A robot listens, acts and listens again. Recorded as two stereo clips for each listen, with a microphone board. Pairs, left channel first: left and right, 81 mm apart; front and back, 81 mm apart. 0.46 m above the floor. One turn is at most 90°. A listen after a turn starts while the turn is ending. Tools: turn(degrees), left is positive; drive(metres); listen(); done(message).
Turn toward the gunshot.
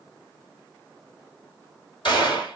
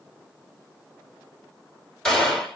turn(degrees=85)
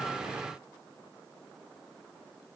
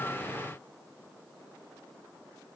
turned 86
done("Facing where the gunshot came from. I can't hear it now.")